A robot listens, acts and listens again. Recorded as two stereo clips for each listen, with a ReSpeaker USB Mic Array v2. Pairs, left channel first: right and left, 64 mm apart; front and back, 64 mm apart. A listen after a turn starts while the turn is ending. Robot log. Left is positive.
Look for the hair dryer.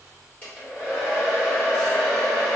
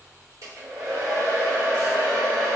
note: The hair dryer: 160° right.
cmd yaw -160
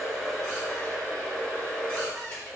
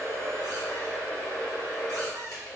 note: The hair dryer is now 25° right.
cmd yaw -25
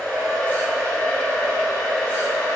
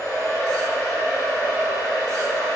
note: The hair dryer is now 10° right.
cmd yaw -10
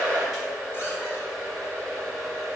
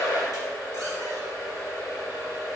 end: Facing the hair dryer, 1 to 2 m away.